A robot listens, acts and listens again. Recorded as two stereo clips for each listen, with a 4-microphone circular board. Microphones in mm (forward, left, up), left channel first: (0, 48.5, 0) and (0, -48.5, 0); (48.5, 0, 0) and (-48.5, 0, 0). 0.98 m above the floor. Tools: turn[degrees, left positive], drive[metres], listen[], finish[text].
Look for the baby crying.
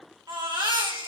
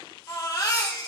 Thought: The baby crying: 50° right.
Action: turn[-50]
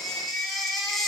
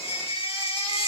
Action: finish[Found it: a baby crying, straight ahead.]